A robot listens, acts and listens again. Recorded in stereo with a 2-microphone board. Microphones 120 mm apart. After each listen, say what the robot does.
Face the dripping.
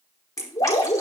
Turn 30° left.
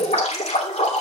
Turn 120° left.
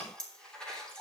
Found it: dripping, straight ahead, 2 to 4 m away.